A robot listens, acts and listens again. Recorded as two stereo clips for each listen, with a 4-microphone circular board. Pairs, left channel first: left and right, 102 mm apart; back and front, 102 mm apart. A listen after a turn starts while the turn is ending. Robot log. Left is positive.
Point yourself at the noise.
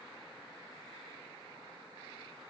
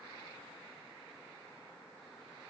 cmd idle
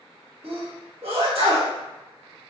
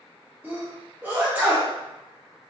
note: The sneeze: 70° right.
cmd yaw -70
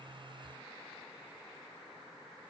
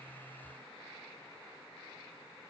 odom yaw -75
end: Facing where the sneeze came from. I can't hear it now.